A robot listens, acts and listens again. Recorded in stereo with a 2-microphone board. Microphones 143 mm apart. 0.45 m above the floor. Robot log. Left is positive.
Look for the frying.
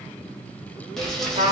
cmd yaw +30
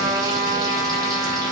cmd idle
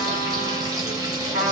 note: So it is at 30° right.
cmd yaw -30
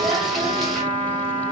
end: Facing the frying.